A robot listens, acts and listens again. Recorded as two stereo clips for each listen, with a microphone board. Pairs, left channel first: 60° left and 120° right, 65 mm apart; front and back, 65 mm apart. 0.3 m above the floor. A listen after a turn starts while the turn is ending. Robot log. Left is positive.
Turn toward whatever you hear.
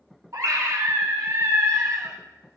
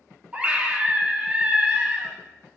note: The scream: 115° right.
cmd yaw -115
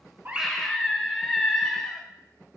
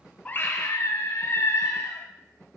note: The scream is now 25° right.
cmd yaw -25
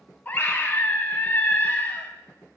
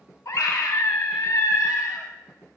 end: Found it: a scream, straight ahead, 1 to 2 m away.